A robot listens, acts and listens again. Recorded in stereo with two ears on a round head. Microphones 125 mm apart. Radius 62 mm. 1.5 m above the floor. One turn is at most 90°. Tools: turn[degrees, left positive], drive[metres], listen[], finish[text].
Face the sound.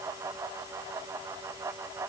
Action: listen[]
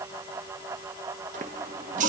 Thought: The running tap: about 60° right or 120° right.
Action: turn[-60]
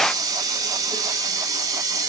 Thought: So it is at 30° right.
Action: turn[-30]
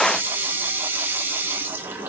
Thought: The running tap is now 15° right.
Action: turn[-15]
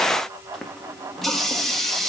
Action: finish[Facing the running tap, 1 to 2 m away.]